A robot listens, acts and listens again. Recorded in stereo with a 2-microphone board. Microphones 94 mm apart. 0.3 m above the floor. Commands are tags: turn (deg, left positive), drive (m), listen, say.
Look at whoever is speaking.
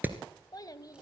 <turn deg="40"/>
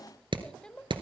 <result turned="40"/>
<turn deg="10"/>
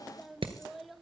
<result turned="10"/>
<say>Found it: a child speaking, straight ahead.</say>